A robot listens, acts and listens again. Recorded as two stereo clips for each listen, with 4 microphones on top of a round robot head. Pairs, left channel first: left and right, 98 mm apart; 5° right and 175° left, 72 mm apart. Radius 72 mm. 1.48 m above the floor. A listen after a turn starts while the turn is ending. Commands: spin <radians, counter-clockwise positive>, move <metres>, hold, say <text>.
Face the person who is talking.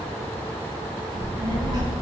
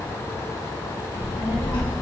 spin -0.52
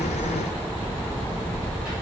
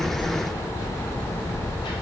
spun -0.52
spin -0.17
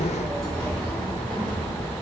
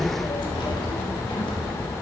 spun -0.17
say Found it: a child speaking, straight ahead.